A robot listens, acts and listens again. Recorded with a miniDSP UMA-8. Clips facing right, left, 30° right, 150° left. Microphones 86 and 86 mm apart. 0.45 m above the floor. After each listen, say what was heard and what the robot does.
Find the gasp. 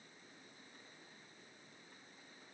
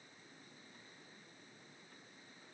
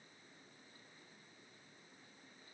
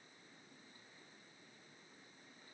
Keep listening.
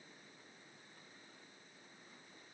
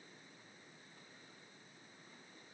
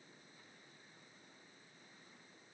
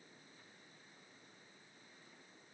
Keep listening.
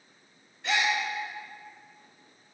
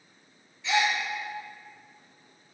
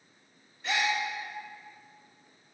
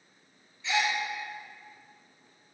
The gasp: 60° right. Turn 60° right.
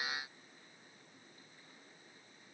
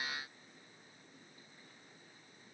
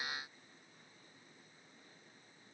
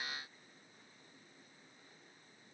I heard a gasp from this way, but can't make it out now.